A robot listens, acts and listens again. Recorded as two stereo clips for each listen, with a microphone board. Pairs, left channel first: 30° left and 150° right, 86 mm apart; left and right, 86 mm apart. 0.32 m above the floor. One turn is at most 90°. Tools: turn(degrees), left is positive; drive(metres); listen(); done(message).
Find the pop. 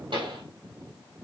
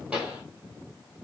turn(degrees=-90)
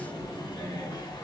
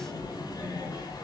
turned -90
turn(degrees=-75)
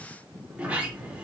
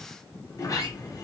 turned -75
done("I heard a pop from this way, but can't make it out now.")